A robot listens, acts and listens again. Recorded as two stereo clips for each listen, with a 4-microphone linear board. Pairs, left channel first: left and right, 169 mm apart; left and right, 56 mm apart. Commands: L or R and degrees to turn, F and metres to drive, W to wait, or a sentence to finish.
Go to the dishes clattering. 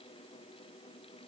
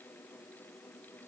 W
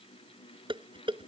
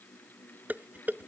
R30
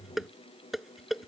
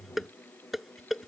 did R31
F1.0
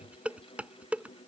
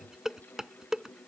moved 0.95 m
F1.0
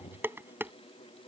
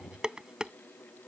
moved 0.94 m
R10
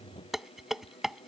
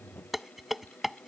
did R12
F1.0
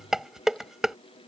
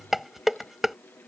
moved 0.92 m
F1.0
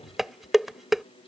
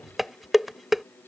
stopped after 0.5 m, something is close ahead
Arrived at the dishes clattering, straight ahead.